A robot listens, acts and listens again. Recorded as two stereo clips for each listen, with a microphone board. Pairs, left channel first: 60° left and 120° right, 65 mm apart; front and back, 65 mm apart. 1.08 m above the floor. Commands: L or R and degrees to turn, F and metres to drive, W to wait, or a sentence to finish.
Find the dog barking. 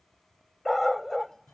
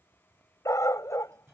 R30
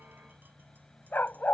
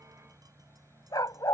Facing the dog barking.